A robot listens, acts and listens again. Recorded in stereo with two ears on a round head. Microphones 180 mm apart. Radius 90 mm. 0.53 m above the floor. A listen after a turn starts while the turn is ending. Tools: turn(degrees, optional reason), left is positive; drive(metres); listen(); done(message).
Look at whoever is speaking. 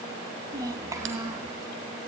turn(degrees=-30)
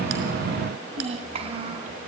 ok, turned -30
turn(degrees=-150, reason="So it is at 150° right.")
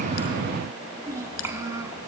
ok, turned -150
turn(degrees=-15, reason="The child speaking is now 15° right.")
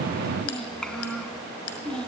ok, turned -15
done("Facing the child speaking, over 4 m away.")